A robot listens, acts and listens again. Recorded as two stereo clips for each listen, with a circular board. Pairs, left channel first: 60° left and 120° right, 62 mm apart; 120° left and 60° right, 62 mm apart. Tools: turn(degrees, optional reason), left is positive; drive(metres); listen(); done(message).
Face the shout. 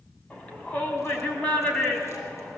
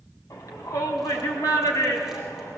turn(degrees=125, reason="The shout: 125° left.")
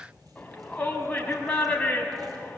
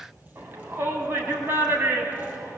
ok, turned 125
turn(degrees=-15, reason="The shout is now 15° right.")
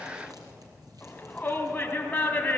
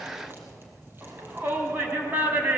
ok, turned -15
done("Facing the shout.")